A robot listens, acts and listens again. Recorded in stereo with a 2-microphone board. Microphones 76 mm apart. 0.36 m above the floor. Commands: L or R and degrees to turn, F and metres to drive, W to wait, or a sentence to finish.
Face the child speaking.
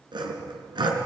W
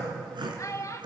L40
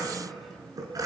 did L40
W
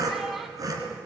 W
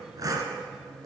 I heard a child speaking, but can't make it out now. It was about straight ahead or 100° left.